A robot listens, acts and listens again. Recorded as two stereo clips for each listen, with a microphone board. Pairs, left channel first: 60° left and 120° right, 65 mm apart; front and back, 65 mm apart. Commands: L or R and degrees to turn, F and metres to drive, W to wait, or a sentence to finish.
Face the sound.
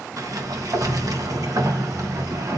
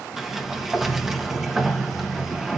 R95
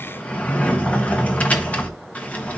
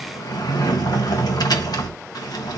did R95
R10
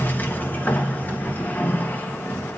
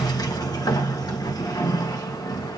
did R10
Found it: a sliding door, straight ahead.